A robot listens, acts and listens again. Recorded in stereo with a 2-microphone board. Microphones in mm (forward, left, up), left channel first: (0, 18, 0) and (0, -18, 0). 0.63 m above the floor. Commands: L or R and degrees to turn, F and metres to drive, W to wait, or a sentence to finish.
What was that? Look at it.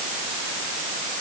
W
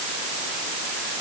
W
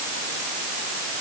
I can't make out anything to turn to.